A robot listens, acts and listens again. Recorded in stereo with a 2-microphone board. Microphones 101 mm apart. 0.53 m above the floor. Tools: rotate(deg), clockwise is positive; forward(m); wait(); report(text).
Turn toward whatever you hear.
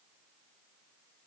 wait()
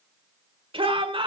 rotate(60)
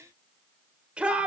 rotate(15)
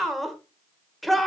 report("Found it: a shout, straight ahead, 1 to 2 m away.")